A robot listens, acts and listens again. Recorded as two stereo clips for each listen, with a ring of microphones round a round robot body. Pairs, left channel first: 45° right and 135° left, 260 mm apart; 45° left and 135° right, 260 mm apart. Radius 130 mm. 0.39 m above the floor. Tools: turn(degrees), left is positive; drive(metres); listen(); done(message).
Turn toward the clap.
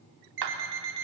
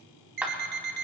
turn(degrees=140)
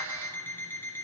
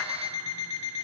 listen()
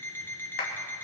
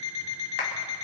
done("Found it: a clap, straight ahead.")